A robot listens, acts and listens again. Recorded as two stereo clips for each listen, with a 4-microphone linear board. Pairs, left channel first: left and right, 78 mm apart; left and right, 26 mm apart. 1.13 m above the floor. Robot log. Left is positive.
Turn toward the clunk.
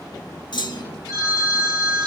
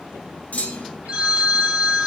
note: The clunk: about 75° left or 105° left.
cmd yaw +75
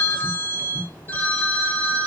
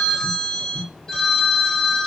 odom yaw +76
cmd idle
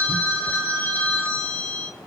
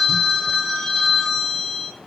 end: I heard a clunk, but can't make it out now. It was about straight ahead or 30° left.